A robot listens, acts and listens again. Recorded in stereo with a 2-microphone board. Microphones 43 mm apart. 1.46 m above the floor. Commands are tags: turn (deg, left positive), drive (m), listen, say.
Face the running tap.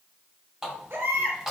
<turn deg="-30"/>
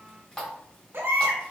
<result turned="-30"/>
<turn deg="25"/>
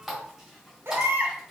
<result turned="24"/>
<say>Found it: a running tap, straight ahead, 2 to 4 m away.</say>